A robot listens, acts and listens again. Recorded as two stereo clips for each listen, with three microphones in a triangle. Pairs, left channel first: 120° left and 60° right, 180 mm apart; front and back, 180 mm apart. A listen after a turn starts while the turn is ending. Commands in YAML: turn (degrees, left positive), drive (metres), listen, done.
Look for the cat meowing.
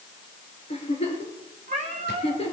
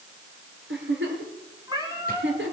turn: -110
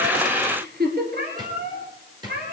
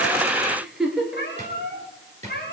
turn: -30
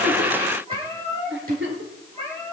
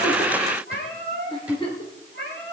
done: "Facing the cat meowing, over 4 m away."